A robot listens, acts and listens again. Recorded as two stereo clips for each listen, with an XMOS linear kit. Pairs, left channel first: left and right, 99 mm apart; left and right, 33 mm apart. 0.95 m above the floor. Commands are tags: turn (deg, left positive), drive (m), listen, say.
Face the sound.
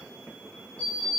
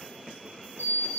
<turn deg="90"/>
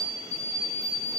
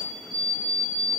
<say>Found it: an alarm clock, straight ahead.</say>